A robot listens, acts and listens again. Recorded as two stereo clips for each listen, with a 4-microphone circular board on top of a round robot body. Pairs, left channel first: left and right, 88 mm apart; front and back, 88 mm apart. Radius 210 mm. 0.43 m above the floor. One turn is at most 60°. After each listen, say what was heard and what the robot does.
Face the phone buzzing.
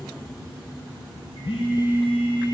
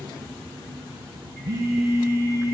The phone buzzing: 120° left. Turn 60° left.
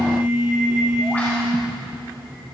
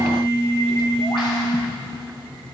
The phone buzzing is now 60° left. Turn 60° left.
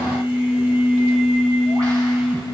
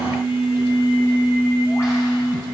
The phone buzzing is now 15° right. Turn 15° right.
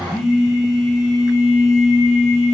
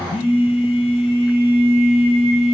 Facing the phone buzzing.